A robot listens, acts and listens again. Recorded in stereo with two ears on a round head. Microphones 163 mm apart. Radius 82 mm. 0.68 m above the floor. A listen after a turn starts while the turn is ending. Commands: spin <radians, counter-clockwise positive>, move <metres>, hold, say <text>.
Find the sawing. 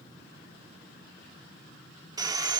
spin -0.35
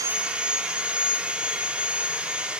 spin -0.17
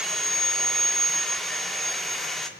say Found it: sawing, straight ahead.